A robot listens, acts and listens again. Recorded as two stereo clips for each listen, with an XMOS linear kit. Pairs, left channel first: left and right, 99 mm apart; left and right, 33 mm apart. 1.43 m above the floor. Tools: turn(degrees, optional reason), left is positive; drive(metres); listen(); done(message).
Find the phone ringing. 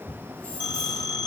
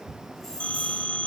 turn(degrees=45, reason="The phone ringing: about 45° left or 135° left.")
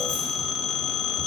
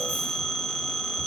done("Found it: a phone ringing, straight ahead, 2 to 4 m away.")